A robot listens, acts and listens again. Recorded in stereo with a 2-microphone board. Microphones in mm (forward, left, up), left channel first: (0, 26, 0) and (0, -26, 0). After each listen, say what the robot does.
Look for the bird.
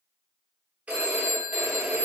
Keep listening.
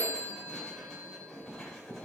Keep listening.
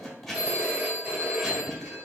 I can't make out a bird to turn to.